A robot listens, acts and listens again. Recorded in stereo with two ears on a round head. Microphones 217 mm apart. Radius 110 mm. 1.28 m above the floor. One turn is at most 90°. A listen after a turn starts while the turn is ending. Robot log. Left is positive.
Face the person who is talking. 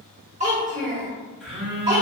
note: The child speaking: about 30° right or 150° right.
cmd yaw -30
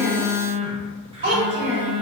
note: So it is at 115° right.
cmd yaw -90
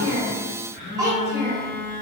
note: The child speaking is now 15° right.
cmd yaw -15
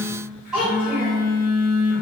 end: Facing the child speaking, 1 to 2 m away.